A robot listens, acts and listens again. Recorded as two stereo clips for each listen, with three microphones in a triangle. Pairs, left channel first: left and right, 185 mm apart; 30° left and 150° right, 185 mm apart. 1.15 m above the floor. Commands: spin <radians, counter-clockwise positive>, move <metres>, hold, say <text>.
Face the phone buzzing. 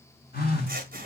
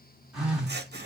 spin 2.18
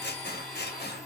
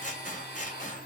hold
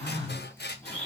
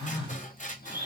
spin -0.61
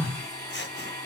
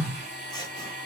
spin -0.17
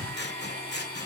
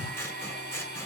say Found it: a phone buzzing, straight ahead, 1 to 2 m away.